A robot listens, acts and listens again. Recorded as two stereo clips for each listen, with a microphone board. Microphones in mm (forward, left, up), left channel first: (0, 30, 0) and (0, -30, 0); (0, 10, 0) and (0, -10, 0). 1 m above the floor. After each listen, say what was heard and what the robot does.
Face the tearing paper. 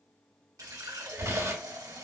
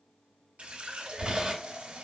The tearing paper: about 50° right or 130° right. Turn 50° right.
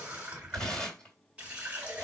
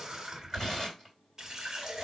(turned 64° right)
So it is at 15° left. Turn 15° left.
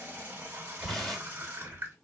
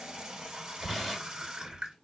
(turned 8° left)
Facing the tearing paper, 2 to 4 m away.